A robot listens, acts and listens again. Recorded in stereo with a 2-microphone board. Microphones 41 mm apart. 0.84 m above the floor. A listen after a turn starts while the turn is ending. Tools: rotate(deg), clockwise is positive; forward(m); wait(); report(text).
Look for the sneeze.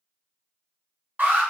wait()
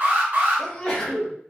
rotate(-20)
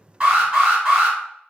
wait()
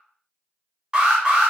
report("I heard a sneeze, but can't make it out now. It was about straight ahead or 140° left.")